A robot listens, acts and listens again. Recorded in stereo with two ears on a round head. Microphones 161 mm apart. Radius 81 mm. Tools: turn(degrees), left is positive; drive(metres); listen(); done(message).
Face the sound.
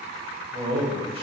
turn(degrees=-35)
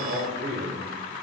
turn(degrees=-35)
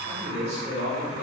turn(degrees=-30)
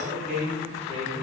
turn(degrees=-40)
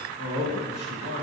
turn(degrees=-120)
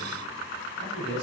turn(degrees=25)
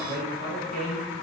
done("Found it: a man speaking, straight ahead, 1 to 2 m away.")